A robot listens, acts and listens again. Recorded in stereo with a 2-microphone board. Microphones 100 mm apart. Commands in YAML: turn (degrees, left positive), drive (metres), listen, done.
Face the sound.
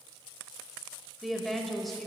turn: 30
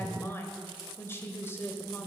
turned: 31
turn: 150
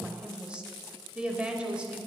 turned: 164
turn: -15
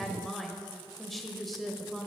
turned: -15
done: "Facing the woman speaking, 1 to 2 m away."